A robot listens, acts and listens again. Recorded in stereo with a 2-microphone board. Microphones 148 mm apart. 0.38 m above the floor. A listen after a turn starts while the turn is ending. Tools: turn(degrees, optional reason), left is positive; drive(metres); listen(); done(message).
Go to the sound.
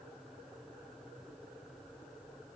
listen()
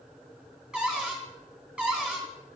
turn(degrees=-30)
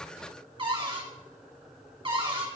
turn(degrees=-145, reason="So it is at 145° right.")
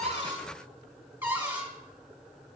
turn(degrees=-15, reason="The cupboard door is now 15° right.")
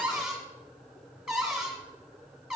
drive(metres=1.0)
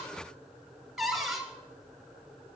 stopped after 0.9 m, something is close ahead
done("Arrived at the cupboard door, straight ahead.")